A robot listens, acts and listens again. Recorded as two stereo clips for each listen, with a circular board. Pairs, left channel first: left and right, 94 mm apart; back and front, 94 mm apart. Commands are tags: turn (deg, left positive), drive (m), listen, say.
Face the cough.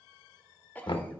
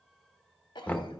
<turn deg="160"/>
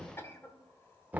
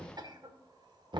<turn deg="30"/>
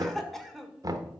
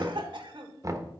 <say>Found it: a cough, straight ahead.</say>